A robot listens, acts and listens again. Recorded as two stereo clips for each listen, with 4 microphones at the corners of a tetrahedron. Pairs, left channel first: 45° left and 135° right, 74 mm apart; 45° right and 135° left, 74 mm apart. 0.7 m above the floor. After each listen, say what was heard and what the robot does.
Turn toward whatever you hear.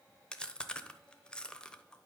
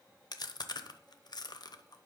The chewing: 35° right. Turn 35° right.
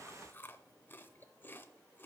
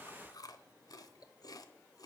The chewing is now 15° right. Turn 15° right.
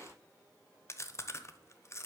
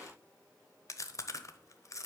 Found it: chewing, straight ahead, under 1 m away.